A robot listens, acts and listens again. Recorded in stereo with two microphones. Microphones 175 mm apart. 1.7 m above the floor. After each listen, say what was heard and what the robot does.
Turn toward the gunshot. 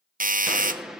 Turn 30° right.
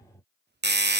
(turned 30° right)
Keep listening.
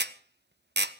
I heard a gunshot, but can't make it out now. It was about 25° left or 145° right.